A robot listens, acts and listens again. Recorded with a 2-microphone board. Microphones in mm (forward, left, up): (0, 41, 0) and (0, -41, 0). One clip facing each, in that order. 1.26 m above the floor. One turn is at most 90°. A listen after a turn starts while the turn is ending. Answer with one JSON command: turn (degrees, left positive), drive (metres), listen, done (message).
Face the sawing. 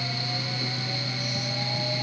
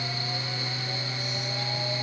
{"listen": true}
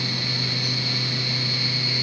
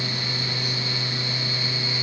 {"listen": true}
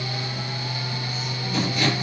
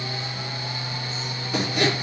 {"turn": -70}
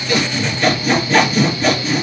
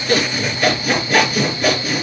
{"turn": -10}
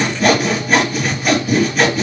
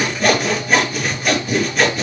{"done": "Facing the sawing, 2 to 4 m away."}